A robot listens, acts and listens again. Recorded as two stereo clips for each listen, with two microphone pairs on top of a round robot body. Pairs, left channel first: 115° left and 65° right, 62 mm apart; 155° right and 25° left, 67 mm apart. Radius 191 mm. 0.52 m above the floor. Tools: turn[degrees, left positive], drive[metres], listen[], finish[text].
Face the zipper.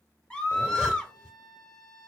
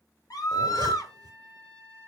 Thought: The zipper: 10° left.
Action: turn[10]
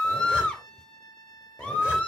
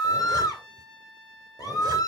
Action: listen[]
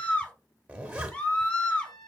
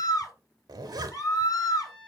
Action: finish[Found it: a zipper, straight ahead.]